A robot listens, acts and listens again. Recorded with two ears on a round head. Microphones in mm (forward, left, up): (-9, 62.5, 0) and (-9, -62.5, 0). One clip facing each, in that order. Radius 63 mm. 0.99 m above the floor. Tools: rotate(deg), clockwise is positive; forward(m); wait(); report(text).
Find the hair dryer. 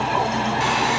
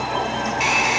rotate(15)
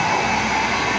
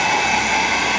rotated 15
rotate(150)
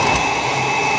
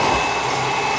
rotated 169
rotate(-20)
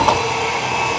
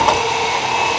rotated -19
report("Facing the hair dryer, 2 to 4 m away.")